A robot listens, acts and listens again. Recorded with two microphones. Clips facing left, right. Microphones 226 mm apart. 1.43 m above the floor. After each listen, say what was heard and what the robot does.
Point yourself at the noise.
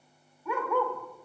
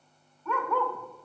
Turn 30° left.
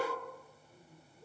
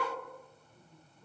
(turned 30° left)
So it is at 135° left. Turn 135° left.
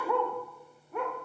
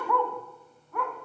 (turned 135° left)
The dog barking is now 25° left. Turn 25° left.
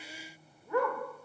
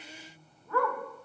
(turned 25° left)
The dog barking is now 20° left. Turn 20° left.
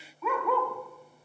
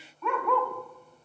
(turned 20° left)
Found it: a dog barking, straight ahead, 2 to 4 m away.